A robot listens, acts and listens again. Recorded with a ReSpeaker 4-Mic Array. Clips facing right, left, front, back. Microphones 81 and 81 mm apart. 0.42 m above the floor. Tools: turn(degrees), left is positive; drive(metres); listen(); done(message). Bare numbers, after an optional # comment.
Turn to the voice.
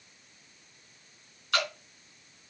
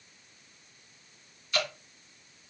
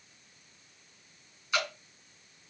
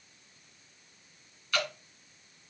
listen()
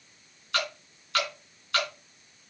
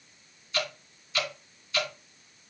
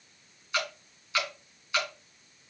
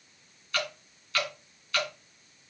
listen()
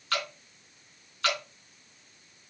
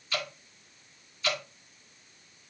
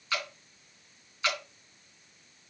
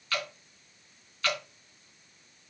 done("I can't make out anyone speaking, only dripping.")